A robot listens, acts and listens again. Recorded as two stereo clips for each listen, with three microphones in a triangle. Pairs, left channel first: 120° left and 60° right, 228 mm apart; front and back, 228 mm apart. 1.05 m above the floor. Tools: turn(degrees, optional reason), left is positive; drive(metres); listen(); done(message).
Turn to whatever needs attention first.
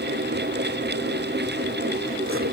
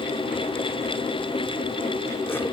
listen()
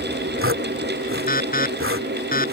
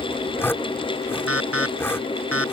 turn(degrees=170, reason="The alarm: 170° left.")
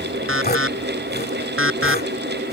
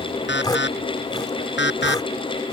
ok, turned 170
turn(degrees=-35, reason="The alarm is now 35° right.")
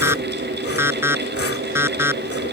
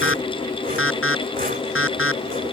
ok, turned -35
turn(degrees=20, reason="The alarm is now 20° left.")
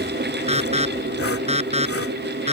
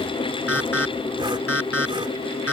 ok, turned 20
done("Found it: an alarm, straight ahead.")